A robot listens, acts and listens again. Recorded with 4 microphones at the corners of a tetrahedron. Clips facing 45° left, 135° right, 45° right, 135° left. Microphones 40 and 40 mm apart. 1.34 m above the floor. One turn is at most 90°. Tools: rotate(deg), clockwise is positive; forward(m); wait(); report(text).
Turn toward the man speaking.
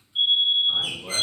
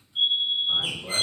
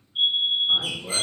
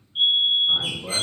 rotate(-90)
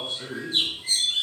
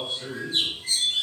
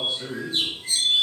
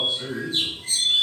rotate(-35)
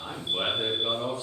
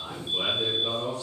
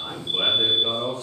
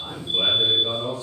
rotate(25)
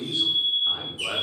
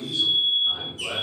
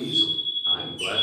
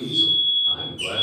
rotate(25)
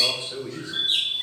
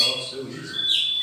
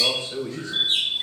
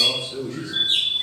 rotate(15)
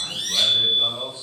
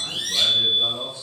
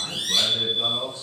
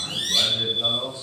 rotate(10)
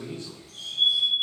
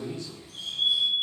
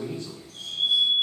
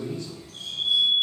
report("Found it: a man speaking, straight ahead.")